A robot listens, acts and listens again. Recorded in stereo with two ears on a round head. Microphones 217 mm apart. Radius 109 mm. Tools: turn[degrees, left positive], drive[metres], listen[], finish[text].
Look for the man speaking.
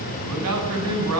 Thought: The man speaking: about 75° right or 105° right.
Action: turn[-75]
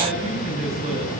Thought: So it is at 30° right.
Action: turn[-30]
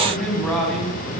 Action: finish[Found it: a man speaking, straight ahead.]